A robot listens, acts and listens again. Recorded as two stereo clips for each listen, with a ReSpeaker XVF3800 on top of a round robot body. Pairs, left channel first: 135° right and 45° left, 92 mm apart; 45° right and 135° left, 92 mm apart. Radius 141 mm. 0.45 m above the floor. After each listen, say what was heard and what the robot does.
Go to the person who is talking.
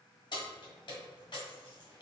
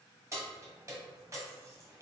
Keep listening.
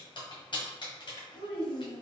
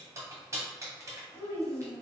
The child speaking: 110° right. Turn 110° right.
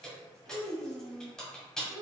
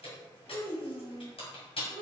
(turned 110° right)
The child speaking is now 10° left. Turn 10° left.
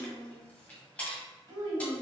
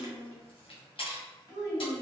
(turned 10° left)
Drive 1.0 m forward.
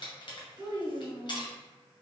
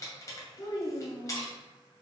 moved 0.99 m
Drive 1.0 m forward.
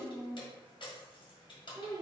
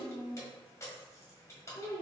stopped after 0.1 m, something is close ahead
I am next to the child speaking.